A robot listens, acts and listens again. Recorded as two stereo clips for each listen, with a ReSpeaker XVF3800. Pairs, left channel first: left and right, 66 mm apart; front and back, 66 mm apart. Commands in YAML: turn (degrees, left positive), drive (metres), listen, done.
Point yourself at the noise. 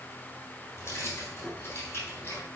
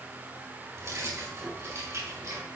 turn: 145
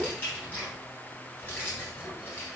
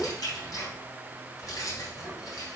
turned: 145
turn: 35
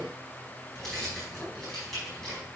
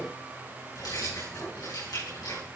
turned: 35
done: "Found it: keys jangling, straight ahead."